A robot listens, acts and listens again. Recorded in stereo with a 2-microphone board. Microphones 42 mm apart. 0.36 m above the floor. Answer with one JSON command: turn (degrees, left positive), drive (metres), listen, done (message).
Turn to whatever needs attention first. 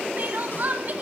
{"turn": -40}
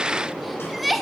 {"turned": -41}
{"done": "Found it: crying, straight ahead, 1 to 2 m away."}